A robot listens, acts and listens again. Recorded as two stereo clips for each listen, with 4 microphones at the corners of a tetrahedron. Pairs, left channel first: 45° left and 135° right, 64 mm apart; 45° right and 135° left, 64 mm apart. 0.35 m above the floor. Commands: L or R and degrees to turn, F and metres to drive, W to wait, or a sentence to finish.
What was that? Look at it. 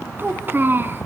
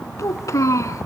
R80
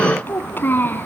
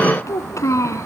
R10
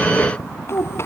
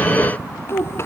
Facing the child speaking.